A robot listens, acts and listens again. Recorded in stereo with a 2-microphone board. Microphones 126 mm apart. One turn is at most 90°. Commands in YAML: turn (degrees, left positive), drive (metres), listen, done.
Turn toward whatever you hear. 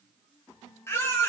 turn: 20
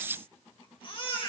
turn: 90
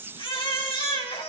turn: 45
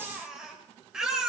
done: "Found it: a baby crying, straight ahead, 2 to 4 m away."